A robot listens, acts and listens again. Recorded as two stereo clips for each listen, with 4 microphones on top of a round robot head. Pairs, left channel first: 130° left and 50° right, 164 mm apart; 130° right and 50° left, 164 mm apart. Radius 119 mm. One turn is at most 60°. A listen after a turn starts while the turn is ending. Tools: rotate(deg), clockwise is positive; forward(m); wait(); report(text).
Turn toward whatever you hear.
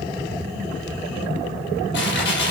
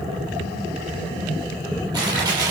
rotate(-60)
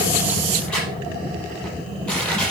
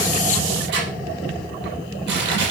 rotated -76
rotate(-45)
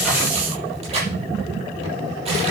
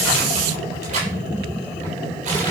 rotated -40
report("Facing the crushing.")